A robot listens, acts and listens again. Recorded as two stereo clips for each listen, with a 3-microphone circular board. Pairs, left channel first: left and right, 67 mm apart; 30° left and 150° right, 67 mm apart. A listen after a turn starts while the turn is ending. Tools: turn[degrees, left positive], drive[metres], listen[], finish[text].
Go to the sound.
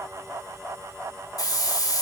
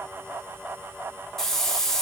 Thought: The hiss: 115° left.
Action: turn[115]
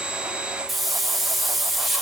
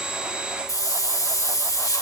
Action: drive[1.0]
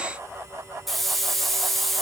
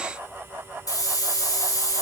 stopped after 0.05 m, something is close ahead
Action: finish[Something is in my way. I am facing the hiss but have not reached it.]